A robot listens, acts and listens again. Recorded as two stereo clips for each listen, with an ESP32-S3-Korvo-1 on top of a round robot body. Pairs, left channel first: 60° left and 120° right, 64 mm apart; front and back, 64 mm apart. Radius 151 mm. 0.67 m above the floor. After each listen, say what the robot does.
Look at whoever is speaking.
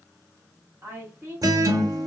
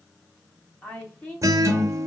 Turn 65° right.
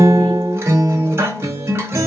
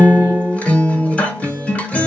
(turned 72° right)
Keep listening.
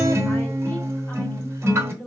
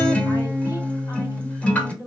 Found it: a woman speaking, straight ahead, 1 to 2 m away.